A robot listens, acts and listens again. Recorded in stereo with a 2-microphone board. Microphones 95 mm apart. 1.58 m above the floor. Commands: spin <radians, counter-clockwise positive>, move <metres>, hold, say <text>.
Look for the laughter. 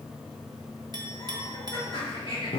spin 1.13
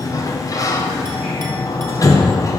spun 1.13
hold
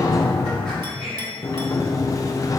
hold
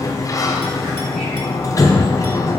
say I heard laughter, but can't make it out now. It was about straight ahead or 50° left.